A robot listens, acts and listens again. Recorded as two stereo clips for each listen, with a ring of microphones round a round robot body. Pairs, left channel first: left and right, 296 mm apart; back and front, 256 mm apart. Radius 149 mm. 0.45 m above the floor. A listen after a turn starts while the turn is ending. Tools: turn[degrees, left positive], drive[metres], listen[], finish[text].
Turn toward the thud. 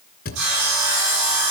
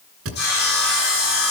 Thought: The thud: 30° left.
Action: turn[30]
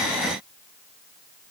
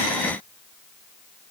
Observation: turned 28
Action: finish[I heard a thud from this way, but can't make it out now.]